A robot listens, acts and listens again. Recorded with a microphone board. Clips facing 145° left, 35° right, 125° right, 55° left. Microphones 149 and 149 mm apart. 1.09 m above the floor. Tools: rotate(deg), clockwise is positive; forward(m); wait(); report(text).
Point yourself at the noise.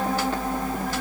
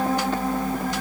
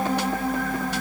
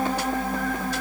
wait()
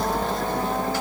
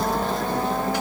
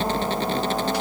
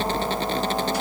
wait()
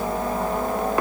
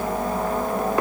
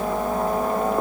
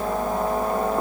report("I can't make out anything.")